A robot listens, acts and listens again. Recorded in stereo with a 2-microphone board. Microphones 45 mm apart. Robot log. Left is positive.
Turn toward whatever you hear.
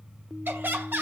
note: The laughter: about 60° right or 120° right.
cmd yaw -60
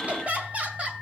note: So it is at 35° right.
cmd yaw -35
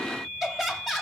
end: Facing the laughter.